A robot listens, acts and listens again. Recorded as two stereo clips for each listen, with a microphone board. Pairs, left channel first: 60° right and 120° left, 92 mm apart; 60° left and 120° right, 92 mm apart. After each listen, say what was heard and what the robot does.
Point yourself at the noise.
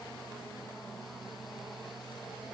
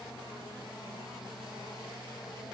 Keep listening.
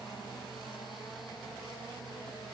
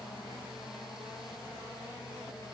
Keep listening.
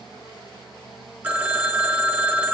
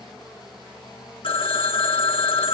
The phone ringing: 45° left. Turn 45° left.
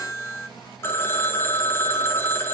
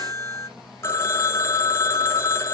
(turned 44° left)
Found it: a phone ringing, straight ahead, under 1 m away.